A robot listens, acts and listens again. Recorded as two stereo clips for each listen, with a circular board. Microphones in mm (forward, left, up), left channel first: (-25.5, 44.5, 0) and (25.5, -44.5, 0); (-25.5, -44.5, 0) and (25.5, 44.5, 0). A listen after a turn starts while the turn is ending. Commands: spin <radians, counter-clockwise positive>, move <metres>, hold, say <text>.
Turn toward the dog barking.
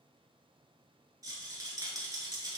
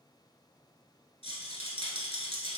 hold
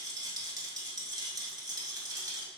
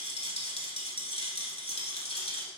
hold
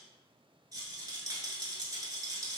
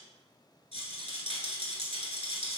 say I can't make out a dog barking, only a rattle.